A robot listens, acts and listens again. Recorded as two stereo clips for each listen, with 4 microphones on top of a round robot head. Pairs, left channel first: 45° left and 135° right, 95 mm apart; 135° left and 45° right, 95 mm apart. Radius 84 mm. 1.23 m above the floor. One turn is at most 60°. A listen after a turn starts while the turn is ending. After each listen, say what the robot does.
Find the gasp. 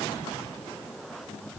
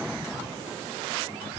Keep listening.
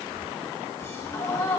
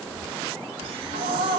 Turn 20° right.
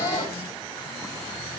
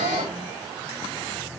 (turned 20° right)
I heard a gasp from this way, but can't make it out now.